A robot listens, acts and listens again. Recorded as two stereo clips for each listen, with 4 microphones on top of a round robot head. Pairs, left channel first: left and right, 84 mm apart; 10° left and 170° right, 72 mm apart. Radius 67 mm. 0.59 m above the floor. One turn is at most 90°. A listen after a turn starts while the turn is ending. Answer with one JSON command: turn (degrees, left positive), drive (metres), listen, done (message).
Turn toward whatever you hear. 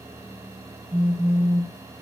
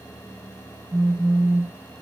{"turn": -90}
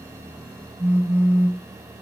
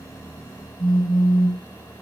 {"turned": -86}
{"turn": -20}
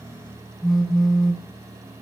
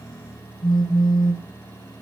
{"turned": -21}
{"done": "Found it: a phone buzzing, straight ahead, over 4 m away."}